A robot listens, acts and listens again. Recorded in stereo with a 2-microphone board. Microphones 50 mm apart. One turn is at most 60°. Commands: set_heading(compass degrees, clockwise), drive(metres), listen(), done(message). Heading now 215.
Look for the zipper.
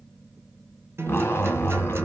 set_heading(165)
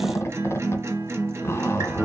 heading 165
set_heading(105)
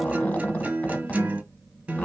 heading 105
set_heading(70)
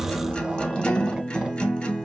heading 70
set_heading(85)
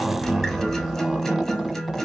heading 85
done("Facing the zipper.")